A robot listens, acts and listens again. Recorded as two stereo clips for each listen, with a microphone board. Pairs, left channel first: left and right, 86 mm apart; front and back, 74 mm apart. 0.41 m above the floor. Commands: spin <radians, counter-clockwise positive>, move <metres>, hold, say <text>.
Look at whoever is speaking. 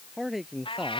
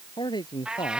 say Found it: a man speaking, straight ahead.